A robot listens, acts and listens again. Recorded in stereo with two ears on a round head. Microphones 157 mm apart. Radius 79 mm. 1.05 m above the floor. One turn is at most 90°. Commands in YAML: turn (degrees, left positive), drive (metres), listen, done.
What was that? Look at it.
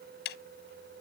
turn: 65
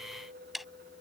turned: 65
done: "Found it: ticking, straight ahead."